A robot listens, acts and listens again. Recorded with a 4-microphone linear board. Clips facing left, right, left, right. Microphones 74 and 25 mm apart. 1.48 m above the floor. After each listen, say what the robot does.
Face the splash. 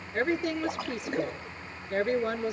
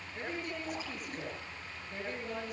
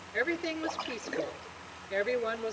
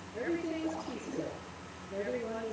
Turn 70° left.
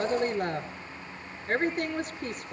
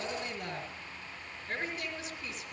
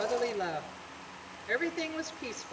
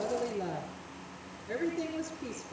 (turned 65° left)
Keep listening.
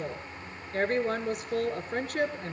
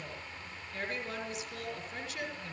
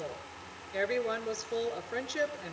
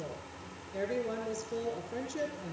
I heard a splash, but can't make it out now. It was about 5° left or 45° left.